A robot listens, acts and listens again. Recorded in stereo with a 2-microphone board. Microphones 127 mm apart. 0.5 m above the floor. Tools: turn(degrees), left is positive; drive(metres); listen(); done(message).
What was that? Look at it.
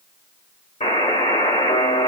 turn(degrees=60)
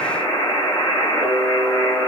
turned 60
turn(degrees=30)
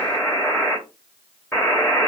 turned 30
turn(degrees=20)
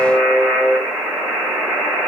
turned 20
done("Found it: a buzzer, straight ahead, 1 to 2 m away.")